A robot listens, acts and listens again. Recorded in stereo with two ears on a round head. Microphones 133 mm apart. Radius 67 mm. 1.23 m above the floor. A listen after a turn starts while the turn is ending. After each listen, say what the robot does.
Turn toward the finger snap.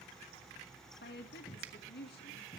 Turn 70° right.
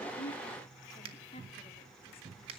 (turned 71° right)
Turn 35° right.
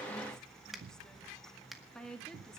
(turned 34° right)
Found it: a finger snap, straight ahead, 1 to 2 m away.